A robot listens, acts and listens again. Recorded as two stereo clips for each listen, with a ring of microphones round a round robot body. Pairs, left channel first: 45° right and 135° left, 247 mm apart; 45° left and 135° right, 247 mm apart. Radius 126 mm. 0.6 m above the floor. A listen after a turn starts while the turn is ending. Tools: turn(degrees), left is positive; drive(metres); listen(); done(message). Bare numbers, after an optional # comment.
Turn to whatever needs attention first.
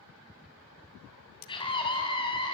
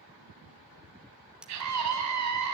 # The scream: 115° right.
turn(-115)
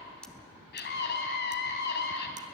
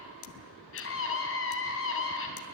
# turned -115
done("Found it: a scream, straight ahead.")